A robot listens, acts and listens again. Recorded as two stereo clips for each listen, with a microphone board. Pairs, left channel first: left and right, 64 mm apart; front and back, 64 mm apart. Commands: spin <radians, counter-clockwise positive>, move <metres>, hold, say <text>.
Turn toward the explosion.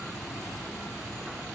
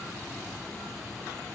hold
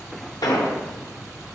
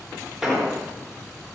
spin 1.66
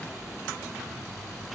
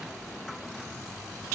say Facing where the explosion came from. I can't hear it now.